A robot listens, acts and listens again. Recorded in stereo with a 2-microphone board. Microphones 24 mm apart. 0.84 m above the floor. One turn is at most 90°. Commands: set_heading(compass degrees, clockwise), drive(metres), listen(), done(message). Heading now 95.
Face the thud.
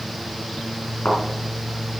set_heading(25)
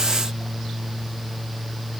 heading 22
listen()
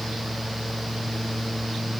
done("I heard a thud, but can't make it out now. It was about straight ahead or 35° left.")